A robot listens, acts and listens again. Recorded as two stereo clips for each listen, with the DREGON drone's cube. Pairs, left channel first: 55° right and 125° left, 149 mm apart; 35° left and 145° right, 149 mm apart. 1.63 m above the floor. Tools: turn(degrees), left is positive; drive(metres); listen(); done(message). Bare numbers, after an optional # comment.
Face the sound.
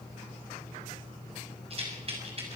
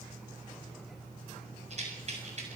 # The rattle: 175° left.
turn(175)
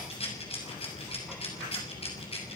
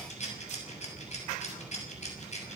done("Facing the rattle, over 4 m away.")